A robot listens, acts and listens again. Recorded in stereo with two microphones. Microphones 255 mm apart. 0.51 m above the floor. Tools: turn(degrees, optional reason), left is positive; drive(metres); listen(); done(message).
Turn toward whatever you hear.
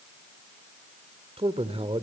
turn(degrees=-20, reason="The man speaking: about 20° right or 160° right.")
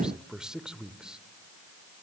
done("Facing the man speaking.")